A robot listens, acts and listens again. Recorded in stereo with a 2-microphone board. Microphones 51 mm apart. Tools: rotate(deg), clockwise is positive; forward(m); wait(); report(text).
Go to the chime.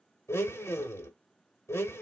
wait()
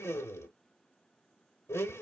wait()
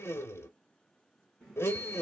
rotate(30)
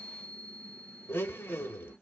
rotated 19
rotate(160)
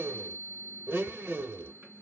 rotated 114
rotate(45)
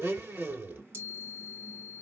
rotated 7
rotate(40)
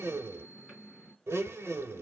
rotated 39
forward(1.0)
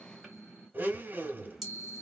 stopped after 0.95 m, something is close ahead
report("Arrived at the chime, straight ahead.")